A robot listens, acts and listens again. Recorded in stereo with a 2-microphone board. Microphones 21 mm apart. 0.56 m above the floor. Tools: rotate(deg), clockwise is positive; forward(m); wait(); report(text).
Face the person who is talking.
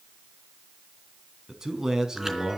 rotate(25)
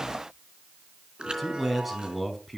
report("Facing the man speaking.")